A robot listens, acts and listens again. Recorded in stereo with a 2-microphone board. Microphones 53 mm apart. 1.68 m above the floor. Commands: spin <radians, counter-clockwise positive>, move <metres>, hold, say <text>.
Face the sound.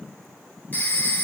spin 0.61
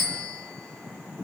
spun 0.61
say Facing the phone ringing, 1 to 2 m away.